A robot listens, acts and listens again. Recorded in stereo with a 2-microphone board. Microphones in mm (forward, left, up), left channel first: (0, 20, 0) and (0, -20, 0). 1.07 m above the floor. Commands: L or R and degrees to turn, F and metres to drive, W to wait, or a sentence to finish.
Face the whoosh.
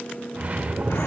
R40
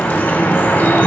W
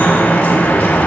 W
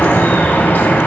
I heard a whoosh, but can't make it out now. It was about straight ahead or 100° right.